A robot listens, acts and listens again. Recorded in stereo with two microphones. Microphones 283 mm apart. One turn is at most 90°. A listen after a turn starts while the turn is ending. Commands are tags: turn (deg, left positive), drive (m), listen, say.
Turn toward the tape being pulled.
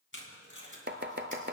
<turn deg="45"/>
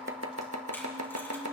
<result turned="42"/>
<listen/>
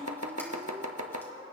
<listen/>
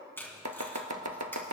<turn deg="10"/>
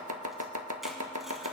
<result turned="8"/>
<listen/>
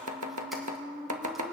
<listen/>
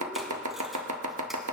<say>Facing where the tape being pulled came from. I can't hear it now.</say>